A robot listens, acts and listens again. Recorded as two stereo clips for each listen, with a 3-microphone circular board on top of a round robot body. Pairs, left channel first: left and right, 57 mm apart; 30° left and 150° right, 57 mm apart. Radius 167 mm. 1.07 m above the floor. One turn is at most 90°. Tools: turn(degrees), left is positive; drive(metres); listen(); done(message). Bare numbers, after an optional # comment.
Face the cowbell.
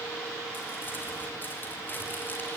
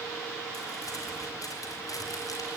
listen()
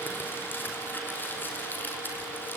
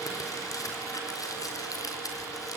listen()
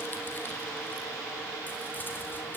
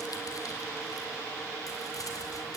done("I can't make out a cowbell to turn to.")